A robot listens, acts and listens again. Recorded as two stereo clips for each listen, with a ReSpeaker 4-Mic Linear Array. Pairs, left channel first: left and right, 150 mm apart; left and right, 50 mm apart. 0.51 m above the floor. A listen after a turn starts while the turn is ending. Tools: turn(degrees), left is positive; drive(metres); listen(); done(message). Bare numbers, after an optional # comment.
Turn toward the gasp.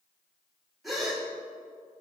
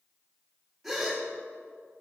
turn(30)
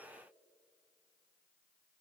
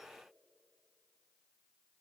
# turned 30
listen()
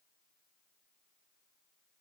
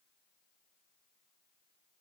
done("I heard a gasp, but can't make it out now. It was about 30° right or 150° left.")